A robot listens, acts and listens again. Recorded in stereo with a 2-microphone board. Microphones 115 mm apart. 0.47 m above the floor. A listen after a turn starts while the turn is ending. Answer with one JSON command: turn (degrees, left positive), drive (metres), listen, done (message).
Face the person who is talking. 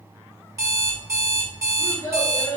{"turn": 30}
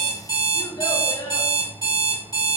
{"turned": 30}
{"turn": 115}
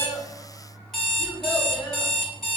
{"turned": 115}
{"listen": true}
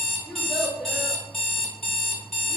{"done": "Found it: a child speaking, straight ahead, 1 to 2 m away."}